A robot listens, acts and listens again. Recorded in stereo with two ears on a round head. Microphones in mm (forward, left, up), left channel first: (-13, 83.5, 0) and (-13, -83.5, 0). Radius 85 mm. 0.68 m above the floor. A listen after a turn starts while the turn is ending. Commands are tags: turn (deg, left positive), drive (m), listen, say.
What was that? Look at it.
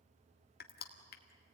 <turn deg="55"/>
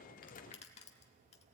<turn deg="45"/>
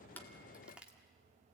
<say>Found it: crushing, straight ahead, 1 to 2 m away.</say>